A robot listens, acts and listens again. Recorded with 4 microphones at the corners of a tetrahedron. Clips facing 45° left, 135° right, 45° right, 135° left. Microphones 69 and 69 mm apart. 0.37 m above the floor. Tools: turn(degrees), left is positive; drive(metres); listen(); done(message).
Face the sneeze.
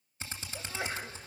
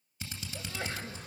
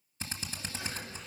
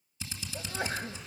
turn(degrees=120)
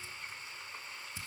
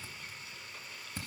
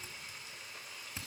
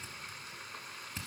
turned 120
done("Facing where the sneeze came from. I can't hear it now.")